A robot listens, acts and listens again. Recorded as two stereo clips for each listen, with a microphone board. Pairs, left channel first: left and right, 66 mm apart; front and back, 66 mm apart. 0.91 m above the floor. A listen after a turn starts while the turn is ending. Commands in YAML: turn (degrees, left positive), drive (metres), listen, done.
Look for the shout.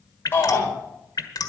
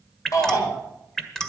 turn: 30
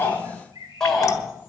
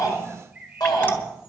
turn: 10
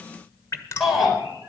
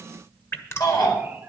done: "Found it: a shout, straight ahead."